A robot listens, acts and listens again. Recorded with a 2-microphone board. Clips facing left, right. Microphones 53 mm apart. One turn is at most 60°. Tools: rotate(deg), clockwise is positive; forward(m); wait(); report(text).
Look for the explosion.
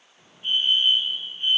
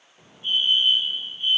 rotate(30)
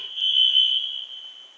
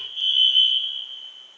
wait()
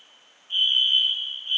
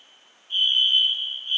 report("I heard an explosion, but can't make it out now. It was about 20° left or 140° right.")